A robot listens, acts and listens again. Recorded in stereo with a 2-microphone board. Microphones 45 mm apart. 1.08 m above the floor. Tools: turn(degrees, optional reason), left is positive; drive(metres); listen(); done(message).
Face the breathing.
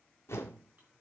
listen()
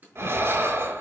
turn(degrees=-70, reason="The breathing: about 70° right or 110° right.")
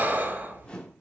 turn(degrees=-40, reason="So it is at 40° right.")
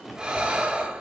turn(degrees=-15, reason="The breathing is now 15° right.")
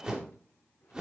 listen()
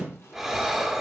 done("Found it: breathing, straight ahead, 1 to 2 m away.")